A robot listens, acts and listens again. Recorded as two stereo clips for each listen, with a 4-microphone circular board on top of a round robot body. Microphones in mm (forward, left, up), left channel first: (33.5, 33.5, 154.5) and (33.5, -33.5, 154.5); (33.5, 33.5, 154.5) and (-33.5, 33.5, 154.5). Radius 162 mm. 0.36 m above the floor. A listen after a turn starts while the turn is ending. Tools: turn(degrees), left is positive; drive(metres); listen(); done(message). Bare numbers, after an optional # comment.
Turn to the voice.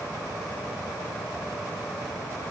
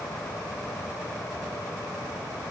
listen()
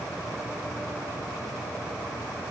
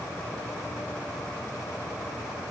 listen()
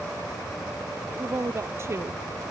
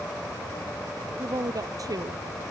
# The woman speaking: 145° right.
turn(-145)
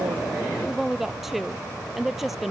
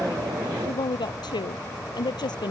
done("Found it: a woman speaking, straight ahead.")